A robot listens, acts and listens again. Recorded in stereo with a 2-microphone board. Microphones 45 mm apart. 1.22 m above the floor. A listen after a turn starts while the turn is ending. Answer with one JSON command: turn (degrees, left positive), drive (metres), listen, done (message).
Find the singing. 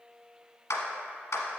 {"listen": true}
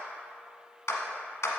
{"listen": true}
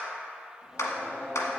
{"turn": 30}
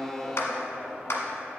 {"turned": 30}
{"turn": -30}
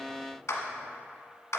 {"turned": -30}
{"listen": true}
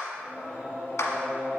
{"turn": 40}
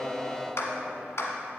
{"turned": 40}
{"turn": 10}
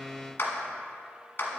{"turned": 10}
{"listen": true}
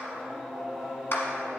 {"done": "Facing the singing."}